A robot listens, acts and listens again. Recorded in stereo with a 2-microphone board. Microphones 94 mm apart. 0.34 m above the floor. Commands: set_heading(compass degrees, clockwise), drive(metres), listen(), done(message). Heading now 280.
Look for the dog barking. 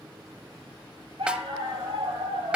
set_heading(350)
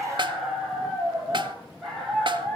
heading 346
done("Facing the dog barking, over 4 m away.")